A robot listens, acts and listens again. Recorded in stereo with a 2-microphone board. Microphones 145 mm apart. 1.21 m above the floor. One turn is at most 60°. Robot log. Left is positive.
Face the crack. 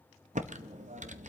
cmd idle
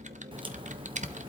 note: The crack: about 35° right or 145° right.
cmd yaw -35
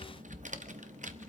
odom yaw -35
cmd idle
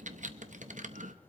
end: I heard a crack, but can't make it out now. It was about straight ahead or 110° right.